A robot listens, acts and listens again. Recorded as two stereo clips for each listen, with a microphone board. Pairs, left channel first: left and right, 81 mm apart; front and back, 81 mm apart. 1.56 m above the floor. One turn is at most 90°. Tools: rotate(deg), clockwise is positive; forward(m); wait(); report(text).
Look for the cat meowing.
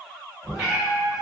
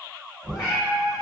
rotate(10)
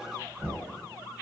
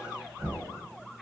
wait()
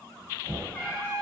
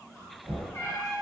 rotate(-35)
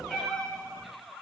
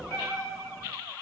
rotate(-20)
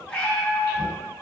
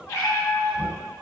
rotate(-35)
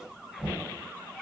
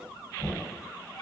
report("Facing the cat meowing.")